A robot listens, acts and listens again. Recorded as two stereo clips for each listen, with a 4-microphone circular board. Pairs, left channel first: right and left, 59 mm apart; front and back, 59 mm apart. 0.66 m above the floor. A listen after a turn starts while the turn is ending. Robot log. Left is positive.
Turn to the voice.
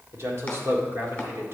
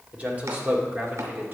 note: The man speaking: 130° left.
cmd yaw +130
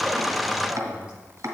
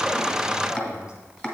note: The man speaking is now 15° left.
cmd yaw +15
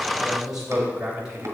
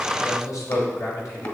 note: The man speaking is now 10° left.
cmd yaw +10
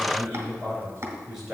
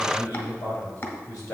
end: Found it: a man speaking, straight ahead.